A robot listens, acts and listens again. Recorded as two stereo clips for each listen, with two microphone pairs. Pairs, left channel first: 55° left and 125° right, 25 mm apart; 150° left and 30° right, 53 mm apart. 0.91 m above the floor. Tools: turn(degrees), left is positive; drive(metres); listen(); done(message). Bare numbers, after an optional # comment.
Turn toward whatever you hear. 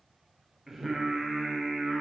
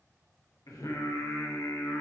# The singing: 150° left.
turn(150)
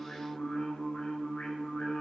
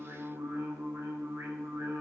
done("Found it: singing, straight ahead, 2 to 4 m away.")